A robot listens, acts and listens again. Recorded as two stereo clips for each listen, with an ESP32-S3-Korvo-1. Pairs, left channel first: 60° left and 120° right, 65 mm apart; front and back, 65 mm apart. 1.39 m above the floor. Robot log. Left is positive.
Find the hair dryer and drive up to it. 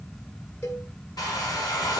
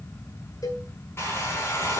note: The hair dryer: 50° left.
cmd yaw +50
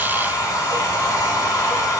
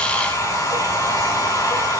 note: The hair dryer is now 30° left.
cmd yaw +30
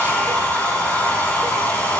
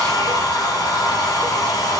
cmd fwd 1.0
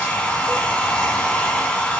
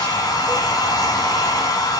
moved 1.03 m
note: The hair dryer is now 10° right.
cmd yaw -10
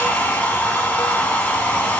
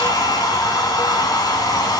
cmd fwd 1.0
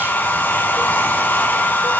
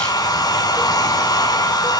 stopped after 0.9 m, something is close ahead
end: I am next to the hair dryer.